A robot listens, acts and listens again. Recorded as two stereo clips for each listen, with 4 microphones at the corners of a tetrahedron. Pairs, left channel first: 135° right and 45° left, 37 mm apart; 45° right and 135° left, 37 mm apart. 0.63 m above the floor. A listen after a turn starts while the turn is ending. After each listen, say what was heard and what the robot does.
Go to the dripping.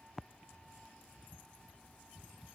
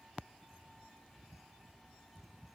Keep listening.
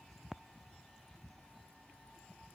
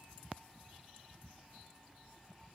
Keep listening.
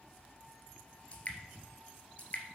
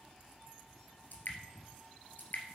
The dripping: 75° right. Turn 75° right.
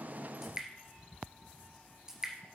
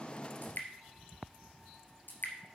The dripping is now 25° right. Turn 25° right.
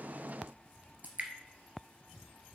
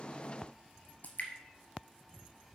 Drive 1.0 m forward.
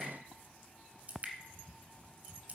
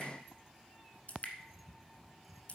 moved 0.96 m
Drive 1.0 m forward.
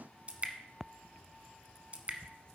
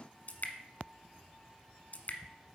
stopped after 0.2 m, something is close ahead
Arrived at the dripping, straight ahead.